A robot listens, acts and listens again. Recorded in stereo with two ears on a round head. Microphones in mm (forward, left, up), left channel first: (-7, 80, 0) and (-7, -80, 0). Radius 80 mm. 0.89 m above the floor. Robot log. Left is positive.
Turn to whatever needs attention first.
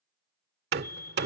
note: The fire alarm: about 55° left or 125° left.
cmd yaw +55
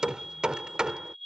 end: Found it: a fire alarm, straight ahead.